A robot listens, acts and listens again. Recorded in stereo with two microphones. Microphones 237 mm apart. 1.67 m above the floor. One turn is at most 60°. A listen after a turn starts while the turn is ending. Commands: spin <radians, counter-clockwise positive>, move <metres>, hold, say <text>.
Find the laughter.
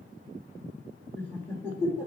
spin 0.52
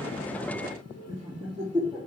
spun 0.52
spin -0.17
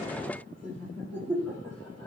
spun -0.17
spin 0.17
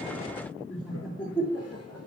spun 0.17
say Found it: laughter, straight ahead.